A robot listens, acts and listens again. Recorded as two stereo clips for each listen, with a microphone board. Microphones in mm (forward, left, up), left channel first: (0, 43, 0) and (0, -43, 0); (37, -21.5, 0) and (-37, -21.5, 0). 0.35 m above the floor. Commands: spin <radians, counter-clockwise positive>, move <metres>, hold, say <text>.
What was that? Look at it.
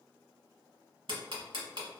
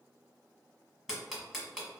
spin -1.66
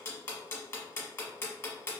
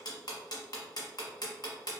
spin 0.44
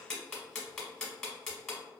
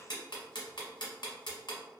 say Facing the ticking.